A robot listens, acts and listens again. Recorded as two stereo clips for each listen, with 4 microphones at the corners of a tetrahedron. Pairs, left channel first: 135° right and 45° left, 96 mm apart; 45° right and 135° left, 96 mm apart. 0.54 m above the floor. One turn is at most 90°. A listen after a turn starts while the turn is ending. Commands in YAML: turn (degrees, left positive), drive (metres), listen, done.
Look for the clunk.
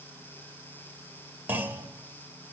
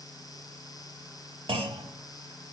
turn: 90
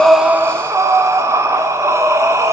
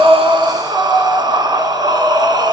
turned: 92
turn: 25
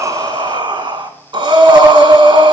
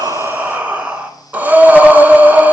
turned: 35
turn: -10
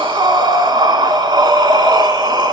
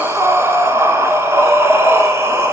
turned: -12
done: "Facing where the clunk came from. I can't hear it now."